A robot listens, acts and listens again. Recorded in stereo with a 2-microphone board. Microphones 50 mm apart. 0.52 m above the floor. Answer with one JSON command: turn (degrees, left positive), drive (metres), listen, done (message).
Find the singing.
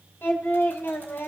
{"turn": 55}
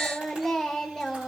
{"turn": 10}
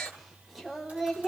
{"done": "Found it: singing, straight ahead."}